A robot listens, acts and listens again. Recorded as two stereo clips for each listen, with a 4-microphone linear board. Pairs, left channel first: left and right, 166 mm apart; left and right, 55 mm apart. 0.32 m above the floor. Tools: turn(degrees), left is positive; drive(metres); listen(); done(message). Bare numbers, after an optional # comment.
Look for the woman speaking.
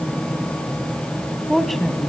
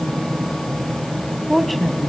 turn(30)
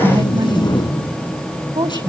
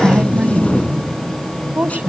# So it is at 30° right.
turn(-30)
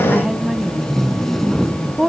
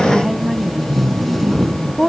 done("Facing the woman speaking, 1 to 2 m away.")